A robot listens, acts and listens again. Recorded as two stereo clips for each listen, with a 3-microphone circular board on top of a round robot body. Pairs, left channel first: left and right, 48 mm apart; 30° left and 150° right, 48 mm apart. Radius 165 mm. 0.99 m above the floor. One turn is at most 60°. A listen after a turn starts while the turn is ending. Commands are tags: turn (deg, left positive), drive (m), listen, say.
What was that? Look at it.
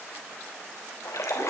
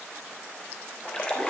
<turn deg="60"/>
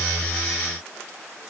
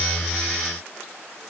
<turn deg="40"/>
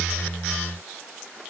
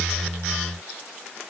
<say>I heard a splash from this way, but can't make it out now.</say>